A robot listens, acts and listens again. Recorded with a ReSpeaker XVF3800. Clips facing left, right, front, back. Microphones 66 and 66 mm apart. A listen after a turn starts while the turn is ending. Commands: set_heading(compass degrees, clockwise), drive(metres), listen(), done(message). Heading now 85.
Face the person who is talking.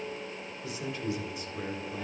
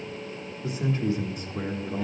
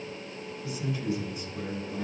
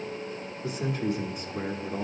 set_heading(225)
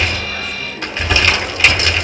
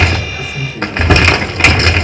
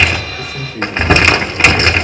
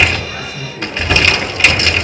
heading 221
done("Facing the man speaking.")